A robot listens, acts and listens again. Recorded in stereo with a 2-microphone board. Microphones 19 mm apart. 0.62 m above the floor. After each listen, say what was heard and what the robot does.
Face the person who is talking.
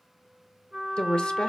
The woman speaking: about 60° left or 120° left. Turn 60° left.
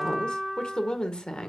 So it is at 55° left. Turn 55° left.
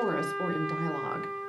The woman speaking is now 15° left. Turn 15° left.
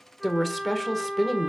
Found it: a woman speaking, straight ahead, 1 to 2 m away.